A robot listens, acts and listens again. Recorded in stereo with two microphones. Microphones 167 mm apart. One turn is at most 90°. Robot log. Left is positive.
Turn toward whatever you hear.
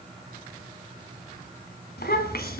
cmd yaw +90
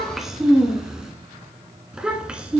end: Facing the child speaking.